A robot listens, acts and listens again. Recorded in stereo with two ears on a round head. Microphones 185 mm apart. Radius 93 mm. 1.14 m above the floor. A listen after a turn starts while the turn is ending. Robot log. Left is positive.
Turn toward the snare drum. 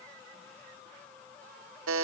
cmd idle
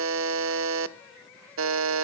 cmd idle
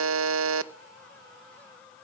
end: I can't make out a snare drum to turn to.